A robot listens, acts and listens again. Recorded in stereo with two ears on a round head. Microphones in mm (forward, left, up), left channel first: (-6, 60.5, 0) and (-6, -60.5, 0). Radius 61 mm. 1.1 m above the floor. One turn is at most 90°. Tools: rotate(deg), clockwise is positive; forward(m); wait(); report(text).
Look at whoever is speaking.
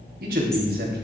rotate(90)
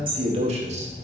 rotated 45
rotate(50)
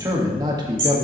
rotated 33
rotate(35)
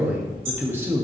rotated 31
rotate(20)
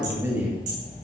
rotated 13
rotate(20)
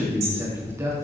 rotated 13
rotate(20)
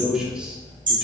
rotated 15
report("Facing the man speaking, 2 to 4 m away.")